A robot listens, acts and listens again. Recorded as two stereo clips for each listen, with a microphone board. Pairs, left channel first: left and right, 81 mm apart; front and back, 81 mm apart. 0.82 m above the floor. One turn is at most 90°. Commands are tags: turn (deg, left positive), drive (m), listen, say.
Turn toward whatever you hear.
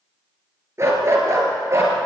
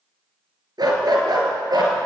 <turn deg="-90"/>
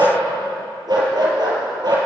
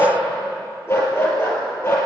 <turn deg="-60"/>
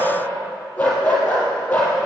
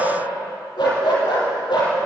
<turn deg="20"/>
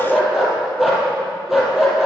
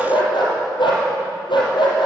<say>Facing the dog barking, over 4 m away.</say>